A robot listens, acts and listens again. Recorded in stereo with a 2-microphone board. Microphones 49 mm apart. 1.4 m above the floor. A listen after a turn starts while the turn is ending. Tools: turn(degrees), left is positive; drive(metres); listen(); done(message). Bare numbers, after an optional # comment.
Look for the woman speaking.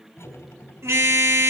listen()
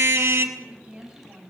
# The woman speaking: about 20° right or 160° right.
turn(-20)
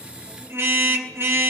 listen()
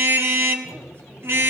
listen()
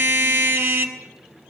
done("I heard a woman speaking, but can't make it out now. It was about straight ahead or 140° right.")